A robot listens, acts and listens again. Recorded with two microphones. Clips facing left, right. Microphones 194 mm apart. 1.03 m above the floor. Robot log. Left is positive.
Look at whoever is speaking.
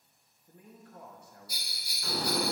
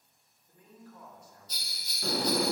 note: The man speaking: about 60° left or 120° left.
cmd yaw +60
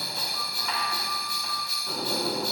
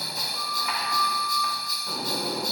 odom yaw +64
cmd idle
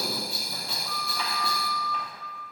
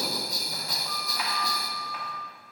cmd idle
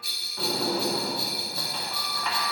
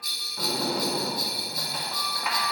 end: I heard a man speaking, but can't make it out now. It was about 5° right or 55° left.